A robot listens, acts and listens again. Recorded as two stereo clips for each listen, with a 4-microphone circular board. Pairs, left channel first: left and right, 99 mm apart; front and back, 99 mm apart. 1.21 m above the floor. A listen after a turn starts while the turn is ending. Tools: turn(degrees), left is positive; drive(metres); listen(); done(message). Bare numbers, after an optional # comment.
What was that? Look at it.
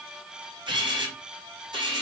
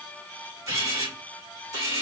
# The camera shutter: 125° right.
turn(-125)
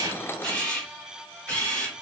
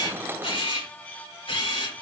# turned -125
# The camera shutter is now 15° left.
turn(15)
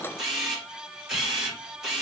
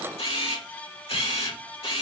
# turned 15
done("Found it: a camera shutter, straight ahead.")